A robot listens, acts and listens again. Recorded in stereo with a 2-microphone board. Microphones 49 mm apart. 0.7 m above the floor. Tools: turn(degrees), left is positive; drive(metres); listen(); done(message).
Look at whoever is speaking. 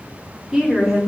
turn(degrees=-30)
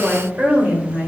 turn(degrees=-140)
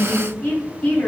turn(degrees=25)
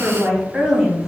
turn(degrees=-10)
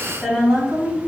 done("Facing the woman speaking, 2 to 4 m away.")